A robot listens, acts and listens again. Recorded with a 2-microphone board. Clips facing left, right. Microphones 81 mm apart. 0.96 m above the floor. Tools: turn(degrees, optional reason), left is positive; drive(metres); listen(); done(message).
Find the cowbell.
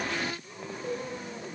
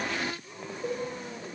turn(degrees=-65, reason="The cowbell: about 65° right or 115° right.")
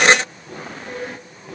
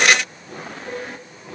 done("Facing the cowbell.")